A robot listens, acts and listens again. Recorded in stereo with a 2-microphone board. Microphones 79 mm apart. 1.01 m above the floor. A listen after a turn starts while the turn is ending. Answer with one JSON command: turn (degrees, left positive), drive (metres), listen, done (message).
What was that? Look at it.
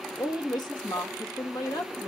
{"turn": 65}
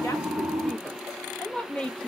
{"turn": 15}
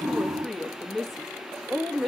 {"done": "Found it: a woman speaking, straight ahead."}